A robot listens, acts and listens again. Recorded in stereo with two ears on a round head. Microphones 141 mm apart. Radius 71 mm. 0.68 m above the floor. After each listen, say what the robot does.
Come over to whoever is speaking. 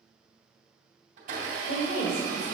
Turn 70° left.
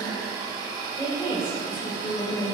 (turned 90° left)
Turn 15° left.
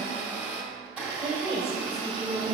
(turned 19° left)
Drive 1.0 m forward.
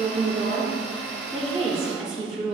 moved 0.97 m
Drive 1.0 m forward.
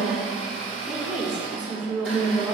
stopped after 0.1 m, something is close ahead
I am next to the woman speaking.